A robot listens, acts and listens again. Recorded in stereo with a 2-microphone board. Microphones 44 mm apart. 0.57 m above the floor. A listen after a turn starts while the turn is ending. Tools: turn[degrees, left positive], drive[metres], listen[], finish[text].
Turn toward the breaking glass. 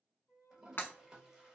Thought: The breaking glass: about 55° left or 125° left.
Action: turn[55]
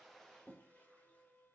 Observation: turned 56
Action: listen[]
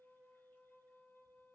Action: finish[I heard breaking glass, but can't make it out now. It was about straight ahead or 70° left.]